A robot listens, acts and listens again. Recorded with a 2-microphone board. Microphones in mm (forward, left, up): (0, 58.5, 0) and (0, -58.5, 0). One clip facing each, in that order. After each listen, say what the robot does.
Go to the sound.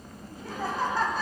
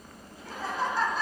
Turn 60° left.
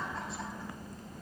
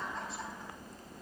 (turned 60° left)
Drive 1.0 m forward.
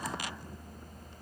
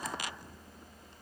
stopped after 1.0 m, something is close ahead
Keep listening.
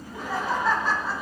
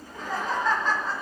Turn 10° left.
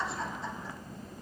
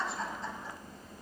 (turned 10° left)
Arrived at the laughter, straight ahead.